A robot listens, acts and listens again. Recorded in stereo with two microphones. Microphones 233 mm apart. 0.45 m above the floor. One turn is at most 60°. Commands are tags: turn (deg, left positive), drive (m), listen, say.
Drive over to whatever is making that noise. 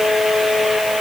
<listen/>
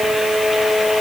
<listen/>
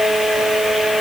<say>I can't make out anything.</say>